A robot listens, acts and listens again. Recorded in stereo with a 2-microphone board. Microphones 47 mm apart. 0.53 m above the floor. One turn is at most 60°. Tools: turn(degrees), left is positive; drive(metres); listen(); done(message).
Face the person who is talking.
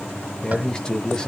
turn(degrees=20)
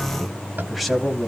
turn(degrees=30)
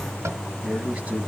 turn(degrees=-25)
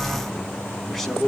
done("Found it: a man speaking, straight ahead, over 4 m away.")